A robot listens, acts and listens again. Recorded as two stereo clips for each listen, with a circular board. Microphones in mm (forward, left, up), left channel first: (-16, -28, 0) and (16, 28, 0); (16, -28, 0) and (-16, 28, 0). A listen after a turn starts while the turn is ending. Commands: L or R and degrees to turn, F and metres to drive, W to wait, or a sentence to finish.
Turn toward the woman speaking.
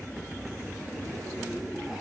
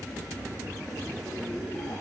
W
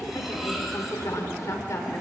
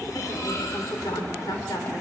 R85
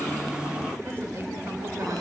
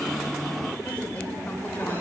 L10
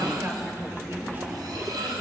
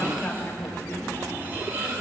Facing the woman speaking.